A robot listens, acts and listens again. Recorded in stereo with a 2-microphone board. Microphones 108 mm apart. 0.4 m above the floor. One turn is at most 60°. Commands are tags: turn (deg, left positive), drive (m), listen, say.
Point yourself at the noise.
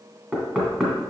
<turn deg="30"/>
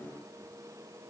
<listen/>
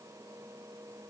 <listen/>
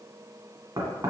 <turn deg="-35"/>
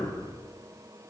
<turn deg="15"/>
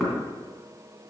<say>Found it: knocking, straight ahead.</say>